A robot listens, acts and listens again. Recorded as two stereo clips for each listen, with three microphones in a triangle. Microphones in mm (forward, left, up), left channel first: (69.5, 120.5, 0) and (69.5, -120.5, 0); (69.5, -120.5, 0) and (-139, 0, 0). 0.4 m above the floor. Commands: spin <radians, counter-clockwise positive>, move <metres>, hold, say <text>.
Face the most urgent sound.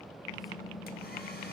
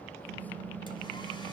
hold
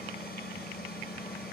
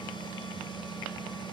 hold
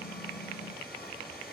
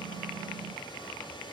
say I can't make out anything urgent, only typing on a keyboard.